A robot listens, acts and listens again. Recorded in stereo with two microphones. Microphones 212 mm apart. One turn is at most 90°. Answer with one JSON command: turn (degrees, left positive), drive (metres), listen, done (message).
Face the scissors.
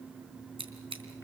{"turn": -25}
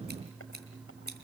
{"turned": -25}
{"turn": -90}
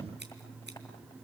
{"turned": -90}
{"turn": -35}
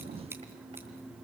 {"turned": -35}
{"listen": true}
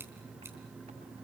{"done": "I heard scissors from this way, but can't make it out now."}